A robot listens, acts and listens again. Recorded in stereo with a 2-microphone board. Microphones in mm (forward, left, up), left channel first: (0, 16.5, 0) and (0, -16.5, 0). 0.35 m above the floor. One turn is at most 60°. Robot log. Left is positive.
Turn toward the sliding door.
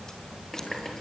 cmd idle
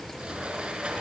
note: The sliding door: about 35° right or 145° right.
cmd yaw -35
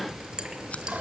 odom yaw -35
cmd idle
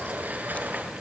note: So it is at 110° right.
cmd yaw -60
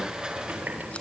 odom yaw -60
note: The sliding door is now 25° right.
cmd yaw -25
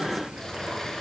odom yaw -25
note: The sliding door is now 15° left.
cmd yaw +15
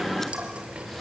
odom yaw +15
cmd idle
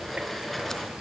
end: Facing the sliding door.